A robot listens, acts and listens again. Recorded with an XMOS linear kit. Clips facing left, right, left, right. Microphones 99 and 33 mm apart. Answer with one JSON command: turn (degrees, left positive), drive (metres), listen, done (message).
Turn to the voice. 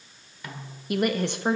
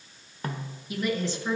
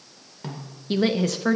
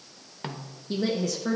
{"turn": 60}
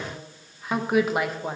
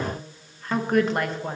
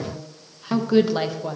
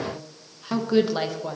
{"done": "Found it: a woman speaking, straight ahead."}